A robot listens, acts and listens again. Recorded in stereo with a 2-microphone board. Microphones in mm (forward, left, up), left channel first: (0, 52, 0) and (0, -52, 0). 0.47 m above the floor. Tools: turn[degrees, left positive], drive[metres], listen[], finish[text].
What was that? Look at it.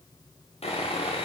Action: turn[90]
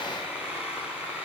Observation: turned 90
Thought: So it is at 10° right.
Action: turn[-10]
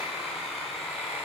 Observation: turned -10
Action: finish[Facing the sawing, over 4 m away.]